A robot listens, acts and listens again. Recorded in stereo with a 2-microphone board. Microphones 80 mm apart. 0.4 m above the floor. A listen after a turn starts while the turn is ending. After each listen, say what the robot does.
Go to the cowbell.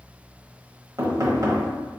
Keep listening.
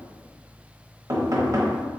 Keep listening.
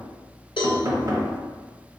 Turn 90° left.
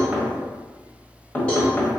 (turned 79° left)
Turn 10° left.
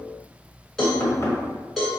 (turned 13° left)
Drive 1.0 m forward.
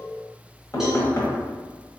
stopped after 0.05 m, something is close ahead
Keep listening.
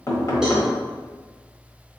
Keep listening.
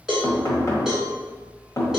Blocked. The cowbell is further on, straight ahead.